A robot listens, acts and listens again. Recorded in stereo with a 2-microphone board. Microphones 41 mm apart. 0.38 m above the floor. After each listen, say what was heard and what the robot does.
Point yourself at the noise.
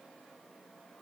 Keep listening.
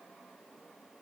Keep listening.
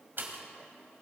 The pop: about 60° right or 120° right. Turn 60° right.
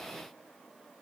Keep listening.
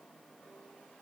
I heard a pop, but can't make it out now. It was about straight ahead or 60° right.